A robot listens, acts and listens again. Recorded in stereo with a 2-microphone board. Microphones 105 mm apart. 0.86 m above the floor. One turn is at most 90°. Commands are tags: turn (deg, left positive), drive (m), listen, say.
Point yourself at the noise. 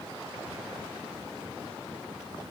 <listen/>
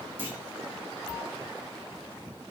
<turn deg="-20"/>
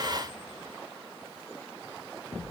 <listen/>
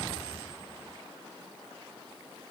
<say>I heard a clunk, but can't make it out now. It was about straight ahead or 140° right.</say>